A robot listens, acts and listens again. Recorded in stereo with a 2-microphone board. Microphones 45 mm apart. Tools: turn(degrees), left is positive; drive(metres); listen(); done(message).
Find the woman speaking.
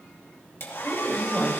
turn(degrees=-30)
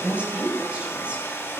turn(degrees=-150)
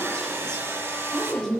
turn(degrees=10)
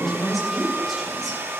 done("Facing the woman speaking.")